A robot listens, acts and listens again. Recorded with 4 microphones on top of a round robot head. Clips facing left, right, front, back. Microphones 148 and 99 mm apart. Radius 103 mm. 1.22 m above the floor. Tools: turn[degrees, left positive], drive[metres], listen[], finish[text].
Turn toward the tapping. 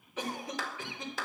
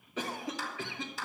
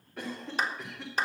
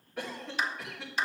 Action: listen[]
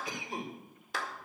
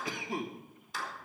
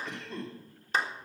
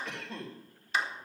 Action: listen[]
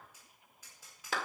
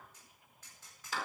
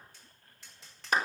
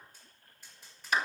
Thought: The tapping: 10° left.
Action: turn[10]
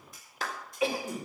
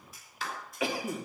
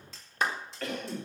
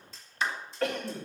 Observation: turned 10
Action: finish[Facing the tapping, over 4 m away.]